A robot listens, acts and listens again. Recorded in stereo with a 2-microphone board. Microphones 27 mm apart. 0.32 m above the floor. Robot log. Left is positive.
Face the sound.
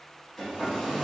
note: The hair dryer: about 15° left or 165° left.
cmd yaw +15
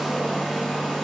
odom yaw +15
end: Facing the hair dryer, 1 to 2 m away.